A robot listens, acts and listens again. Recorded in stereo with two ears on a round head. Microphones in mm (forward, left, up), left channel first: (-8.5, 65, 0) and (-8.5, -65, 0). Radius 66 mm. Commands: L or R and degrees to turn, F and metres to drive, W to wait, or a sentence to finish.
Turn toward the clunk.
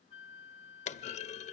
L50
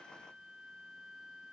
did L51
W
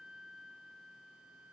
I heard a clunk, but can't make it out now. It was about straight ahead or 80° left.